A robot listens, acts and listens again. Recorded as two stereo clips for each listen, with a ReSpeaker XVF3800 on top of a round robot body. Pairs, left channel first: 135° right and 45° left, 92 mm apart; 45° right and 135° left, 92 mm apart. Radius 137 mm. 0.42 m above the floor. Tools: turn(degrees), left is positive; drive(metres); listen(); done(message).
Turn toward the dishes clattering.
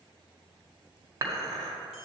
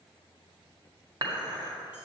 turn(degrees=95)
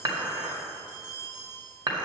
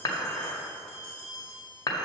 done("Found it: dishes clattering, straight ahead.")